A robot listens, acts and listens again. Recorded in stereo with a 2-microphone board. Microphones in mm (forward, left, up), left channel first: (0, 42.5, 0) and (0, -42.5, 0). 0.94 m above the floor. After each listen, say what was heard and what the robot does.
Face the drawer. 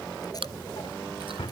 The drawer: about 70° left or 110° left. Turn 70° left.
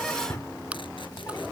So it is at 35° left. Turn 35° left.
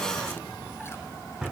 Found it: a drawer, straight ahead.